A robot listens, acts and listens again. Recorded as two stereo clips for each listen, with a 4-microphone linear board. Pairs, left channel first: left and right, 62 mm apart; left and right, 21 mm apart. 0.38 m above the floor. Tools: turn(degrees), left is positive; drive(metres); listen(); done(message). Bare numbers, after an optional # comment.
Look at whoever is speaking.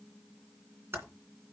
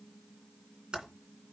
listen()
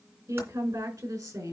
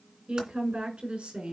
turn(-90)
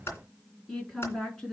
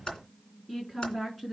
# So it is at 10° left.
turn(10)
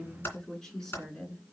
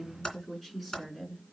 # The woman speaking is now 10° left.
turn(10)
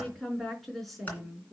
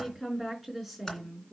done("Found it: a woman speaking, straight ahead, over 4 m away.")